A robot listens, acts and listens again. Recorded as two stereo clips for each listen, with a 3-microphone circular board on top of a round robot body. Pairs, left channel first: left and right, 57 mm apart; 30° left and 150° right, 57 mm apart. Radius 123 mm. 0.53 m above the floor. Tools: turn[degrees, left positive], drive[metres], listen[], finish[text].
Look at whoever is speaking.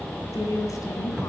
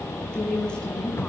Thought: The woman speaking: 105° left.
Action: turn[105]
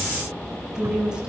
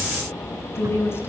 Thought: The woman speaking is now 15° right.
Action: turn[-15]
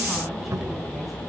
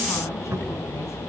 Action: listen[]
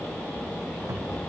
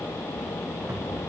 Action: listen[]
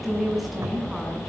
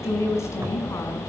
Action: finish[Found it: a woman speaking, straight ahead, over 4 m away.]